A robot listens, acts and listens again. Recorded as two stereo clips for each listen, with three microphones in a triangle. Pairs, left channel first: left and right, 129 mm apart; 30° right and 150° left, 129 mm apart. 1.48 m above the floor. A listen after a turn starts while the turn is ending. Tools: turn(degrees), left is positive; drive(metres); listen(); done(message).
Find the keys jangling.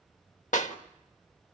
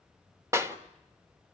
listen()
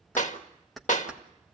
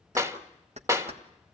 turn(degrees=180)
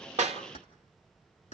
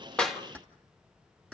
turn(degrees=55)
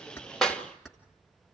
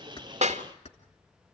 done("Found it: keys jangling, straight ahead, 2 to 4 m away.")